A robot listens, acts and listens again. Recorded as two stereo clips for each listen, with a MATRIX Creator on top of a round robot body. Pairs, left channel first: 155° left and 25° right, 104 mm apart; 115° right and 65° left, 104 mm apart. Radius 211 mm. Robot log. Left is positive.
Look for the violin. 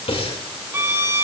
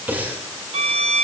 note: The violin: 45° left.
cmd yaw +45
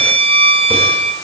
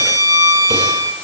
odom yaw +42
end: Found it: a violin, straight ahead.